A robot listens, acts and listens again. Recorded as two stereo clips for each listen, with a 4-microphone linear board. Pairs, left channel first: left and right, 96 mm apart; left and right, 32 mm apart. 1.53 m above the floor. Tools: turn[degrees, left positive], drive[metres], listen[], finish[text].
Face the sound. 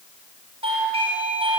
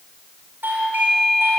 Action: turn[-90]
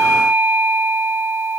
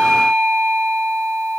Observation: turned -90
Thought: So it is at 10° right.
Action: turn[-10]
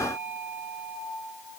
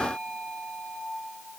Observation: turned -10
Action: finish[Found it: a doorbell, straight ahead, over 4 m away.]